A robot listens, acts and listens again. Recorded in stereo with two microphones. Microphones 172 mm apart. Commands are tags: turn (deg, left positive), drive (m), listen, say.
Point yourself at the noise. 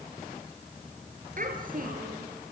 <turn deg="-60"/>
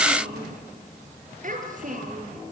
<turn deg="-55"/>
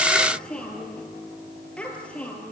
<say>Facing the child speaking.</say>